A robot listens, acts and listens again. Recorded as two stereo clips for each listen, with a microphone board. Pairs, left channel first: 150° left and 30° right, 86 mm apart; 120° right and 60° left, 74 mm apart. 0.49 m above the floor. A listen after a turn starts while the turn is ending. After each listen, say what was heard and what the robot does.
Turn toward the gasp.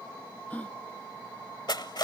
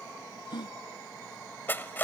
The gasp: 135° right. Turn 135° right.
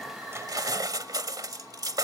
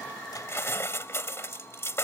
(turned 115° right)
Nothing new. It was at 20° right. Turn 20° right.
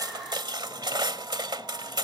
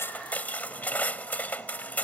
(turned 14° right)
Facing where the gasp came from. I can't hear it now.